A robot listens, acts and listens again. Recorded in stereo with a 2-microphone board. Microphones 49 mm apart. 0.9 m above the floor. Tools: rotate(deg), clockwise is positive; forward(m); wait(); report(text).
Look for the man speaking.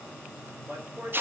rotate(50)
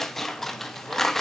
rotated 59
wait()
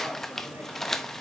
wait()
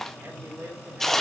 rotate(70)
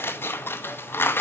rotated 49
rotate(20)
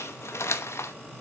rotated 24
wait()
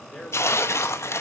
report("Found it: a man speaking, straight ahead, 2 to 4 m away.")